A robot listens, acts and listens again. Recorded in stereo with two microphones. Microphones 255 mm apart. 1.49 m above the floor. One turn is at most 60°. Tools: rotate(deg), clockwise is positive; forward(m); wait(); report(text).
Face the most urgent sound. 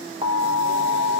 rotate(25)
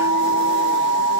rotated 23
rotate(60)
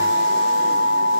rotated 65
rotate(60)
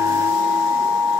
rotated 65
report("Facing the alarm, under 1 m away.")